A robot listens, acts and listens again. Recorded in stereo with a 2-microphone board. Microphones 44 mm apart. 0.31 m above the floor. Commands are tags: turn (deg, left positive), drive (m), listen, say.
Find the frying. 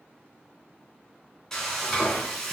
<turn deg="30"/>
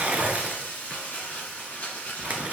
<turn deg="140"/>
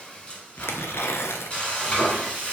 <turn deg="30"/>
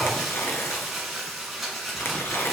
<say>Facing the frying, 1 to 2 m away.</say>